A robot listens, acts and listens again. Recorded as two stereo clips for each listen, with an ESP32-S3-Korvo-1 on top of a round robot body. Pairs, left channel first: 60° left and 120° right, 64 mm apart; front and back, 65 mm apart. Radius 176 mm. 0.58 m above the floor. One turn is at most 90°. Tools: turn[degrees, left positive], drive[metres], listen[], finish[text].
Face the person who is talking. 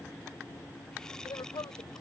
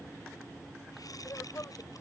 Thought: The woman speaking: 50° left.
Action: turn[50]
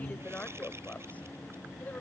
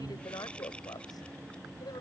Action: finish[Found it: a woman speaking, straight ahead.]